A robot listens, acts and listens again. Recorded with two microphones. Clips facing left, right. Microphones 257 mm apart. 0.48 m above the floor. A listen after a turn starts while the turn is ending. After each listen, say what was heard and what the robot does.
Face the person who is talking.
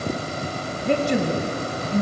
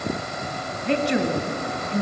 The woman speaking: about 50° left or 130° left. Turn 50° left.
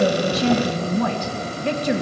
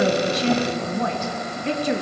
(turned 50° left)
So it is at 80° left. Turn 80° left.
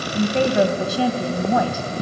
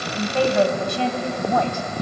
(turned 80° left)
Found it: a woman speaking, straight ahead, 2 to 4 m away.